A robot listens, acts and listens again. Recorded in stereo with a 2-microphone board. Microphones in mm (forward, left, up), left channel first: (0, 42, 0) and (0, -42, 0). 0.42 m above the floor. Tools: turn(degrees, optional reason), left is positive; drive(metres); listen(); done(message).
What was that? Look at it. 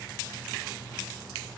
listen()
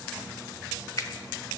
turn(degrees=45, reason="The finger snap: about 45° left or 135° left.")
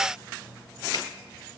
listen()
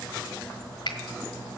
turn(degrees=80, reason="So it is at 80° left.")
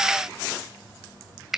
done("Found it: a finger snap, straight ahead, 1 to 2 m away.")